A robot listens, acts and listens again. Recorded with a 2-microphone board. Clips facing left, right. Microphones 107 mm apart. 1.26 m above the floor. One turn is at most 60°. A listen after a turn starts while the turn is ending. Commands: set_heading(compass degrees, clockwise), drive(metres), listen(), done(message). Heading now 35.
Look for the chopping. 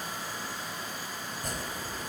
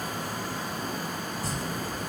set_heading(335)
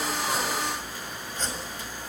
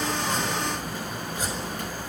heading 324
set_heading(334)
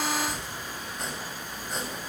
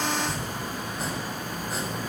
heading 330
done("Found it: chopping, straight ahead, over 4 m away.")